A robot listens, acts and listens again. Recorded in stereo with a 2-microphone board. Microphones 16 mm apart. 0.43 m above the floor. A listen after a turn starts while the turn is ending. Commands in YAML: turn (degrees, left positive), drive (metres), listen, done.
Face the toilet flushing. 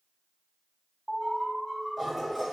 turn: -30
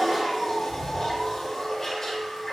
turn: 25
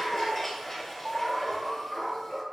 turn: 15
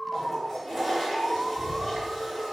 done: "Found it: a toilet flushing, straight ahead, 2 to 4 m away."